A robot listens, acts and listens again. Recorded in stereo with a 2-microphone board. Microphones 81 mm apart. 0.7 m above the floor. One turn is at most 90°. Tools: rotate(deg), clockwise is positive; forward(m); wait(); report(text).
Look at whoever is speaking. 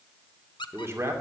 rotate(35)
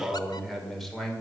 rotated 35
report("Facing the man speaking, 2 to 4 m away.")